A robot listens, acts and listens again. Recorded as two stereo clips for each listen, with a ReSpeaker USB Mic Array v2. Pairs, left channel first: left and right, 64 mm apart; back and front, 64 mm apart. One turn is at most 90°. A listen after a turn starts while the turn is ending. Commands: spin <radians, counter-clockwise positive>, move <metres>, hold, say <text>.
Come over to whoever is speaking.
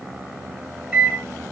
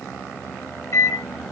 hold
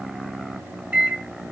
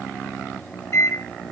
hold
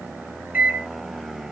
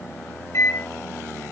say I can't make out anyone speaking, only a microwave.